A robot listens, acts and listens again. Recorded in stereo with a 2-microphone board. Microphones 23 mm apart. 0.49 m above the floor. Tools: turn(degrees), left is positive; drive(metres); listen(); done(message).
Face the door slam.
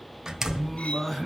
turn(degrees=-25)
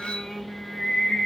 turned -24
listen()
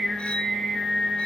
done("I heard a door slam, but can't make it out now. It was about straight ahead or 130° right.")